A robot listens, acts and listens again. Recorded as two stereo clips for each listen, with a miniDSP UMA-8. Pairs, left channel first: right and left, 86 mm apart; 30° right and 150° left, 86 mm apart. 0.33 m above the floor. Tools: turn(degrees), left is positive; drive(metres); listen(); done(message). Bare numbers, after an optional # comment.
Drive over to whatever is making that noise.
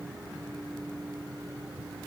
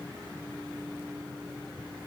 listen()
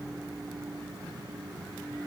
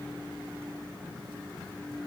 listen()
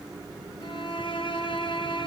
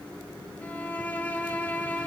# The violin: 100° right.
turn(-100)
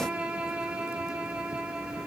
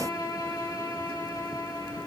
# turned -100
# The violin is now 15° left.
turn(15)
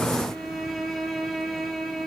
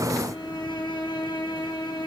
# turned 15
drive(1.0)
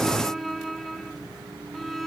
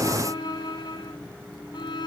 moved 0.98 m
drive(1.0)
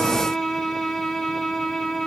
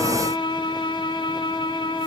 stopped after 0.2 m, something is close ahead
done("Arrived at the violin, straight ahead.")